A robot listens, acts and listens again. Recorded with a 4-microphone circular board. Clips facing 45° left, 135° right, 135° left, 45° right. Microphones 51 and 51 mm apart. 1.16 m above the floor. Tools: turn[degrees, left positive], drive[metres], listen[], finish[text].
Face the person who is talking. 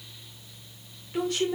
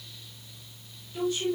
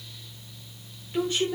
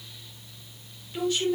Thought: The woman speaking: 75° left.
Action: turn[75]
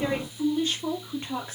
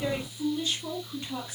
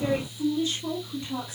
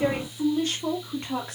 Thought: The woman speaking is now 10° right.
Action: turn[-10]
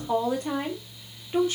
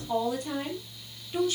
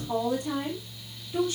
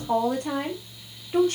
Thought: The woman speaking is now 15° right.
Action: turn[-15]
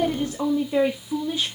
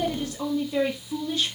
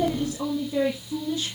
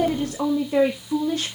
Thought: The woman speaking is now 30° right.
Action: turn[-30]
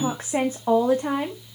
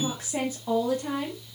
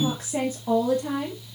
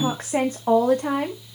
Action: finish[Facing the woman speaking.]